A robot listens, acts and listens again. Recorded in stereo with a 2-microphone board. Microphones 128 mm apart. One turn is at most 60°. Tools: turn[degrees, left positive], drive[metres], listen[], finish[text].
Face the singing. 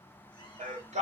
Thought: The singing: about 60° right or 120° right.
Action: turn[-60]
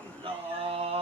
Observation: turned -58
Thought: So it is at 45° right.
Action: turn[-45]
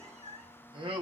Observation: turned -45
Thought: The singing is now 45° right.
Action: turn[-45]
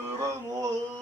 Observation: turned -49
Thought: The singing is now 30° right.
Action: turn[-30]
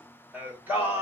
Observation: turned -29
Thought: The singing is now 15° right.
Action: turn[-15]
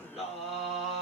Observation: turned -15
Action: finish[Found it: singing, straight ahead, 1 to 2 m away.]